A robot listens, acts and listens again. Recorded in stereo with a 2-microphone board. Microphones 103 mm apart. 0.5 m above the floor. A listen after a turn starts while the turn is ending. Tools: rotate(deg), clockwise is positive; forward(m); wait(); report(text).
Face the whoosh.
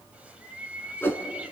rotate(-20)
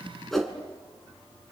report("Facing the whoosh.")